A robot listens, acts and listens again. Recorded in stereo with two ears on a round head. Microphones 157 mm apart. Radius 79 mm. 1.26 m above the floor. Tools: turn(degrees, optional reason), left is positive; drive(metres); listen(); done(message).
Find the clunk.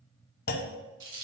turn(degrees=60, reason="The clunk: about 60° left or 120° left.")
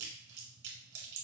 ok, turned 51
listen()
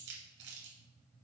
done("I heard a clunk, but can't make it out now. It was about 10° left or 70° left.")